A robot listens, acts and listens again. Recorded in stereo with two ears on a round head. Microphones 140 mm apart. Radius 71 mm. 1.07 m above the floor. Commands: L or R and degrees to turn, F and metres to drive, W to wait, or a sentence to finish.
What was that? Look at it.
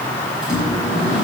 R30
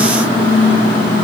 R150
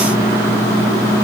R20
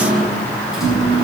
Found it: a microwave, straight ahead.